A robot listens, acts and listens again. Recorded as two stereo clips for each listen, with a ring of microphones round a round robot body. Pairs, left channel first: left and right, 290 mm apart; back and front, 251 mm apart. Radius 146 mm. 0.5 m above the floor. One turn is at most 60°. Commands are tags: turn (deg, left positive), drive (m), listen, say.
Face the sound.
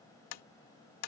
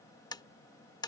<turn deg="60"/>
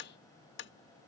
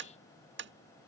<turn deg="40"/>
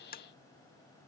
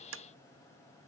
<turn deg="30"/>
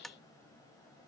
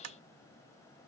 <say>Facing the tapping.</say>